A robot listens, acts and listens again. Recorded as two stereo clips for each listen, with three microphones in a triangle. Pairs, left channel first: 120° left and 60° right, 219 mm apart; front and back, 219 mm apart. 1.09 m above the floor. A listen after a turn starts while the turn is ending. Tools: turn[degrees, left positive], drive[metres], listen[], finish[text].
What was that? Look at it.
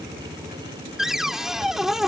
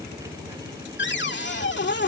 Thought: The cupboard door: 30° left.
Action: turn[30]
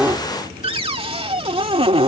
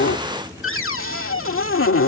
Action: finish[Found it: a cupboard door, straight ahead.]